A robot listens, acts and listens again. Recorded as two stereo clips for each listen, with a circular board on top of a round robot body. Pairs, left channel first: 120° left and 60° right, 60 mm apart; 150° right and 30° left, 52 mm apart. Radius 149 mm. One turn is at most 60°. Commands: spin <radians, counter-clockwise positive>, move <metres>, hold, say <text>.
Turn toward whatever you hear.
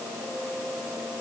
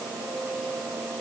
hold
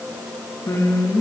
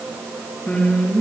spin 1.05
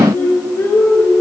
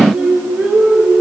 spin 1.05
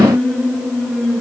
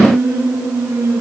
spin 0.79
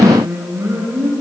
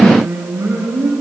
spin -0.26
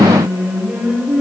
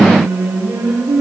say Found it: singing, straight ahead.